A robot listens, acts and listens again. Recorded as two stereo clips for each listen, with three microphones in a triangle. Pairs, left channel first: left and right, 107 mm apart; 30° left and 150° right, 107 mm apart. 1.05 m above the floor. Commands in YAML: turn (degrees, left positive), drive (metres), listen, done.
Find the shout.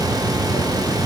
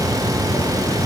listen: true
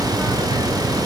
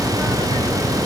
listen: true
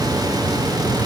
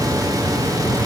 done: "I can't make out a shout."